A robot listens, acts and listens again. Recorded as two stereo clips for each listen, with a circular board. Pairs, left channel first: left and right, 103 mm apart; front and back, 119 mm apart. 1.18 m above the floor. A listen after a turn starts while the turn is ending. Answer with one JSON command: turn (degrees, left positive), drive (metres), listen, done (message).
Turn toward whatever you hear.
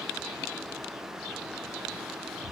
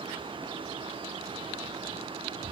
{"listen": true}
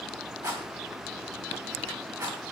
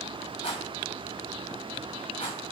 {"turn": -35}
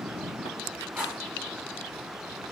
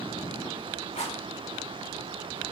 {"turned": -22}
{"turn": -15}
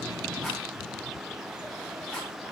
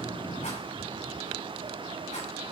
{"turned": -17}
{"listen": true}
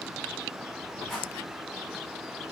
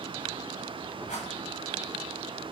{"done": "Found it: a rattle, straight ahead."}